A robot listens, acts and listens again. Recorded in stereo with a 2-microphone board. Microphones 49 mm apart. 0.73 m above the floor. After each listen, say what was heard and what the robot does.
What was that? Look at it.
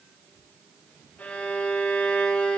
The violin: about 35° left or 145° left. Turn 35° left.
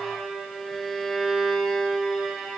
Facing the violin.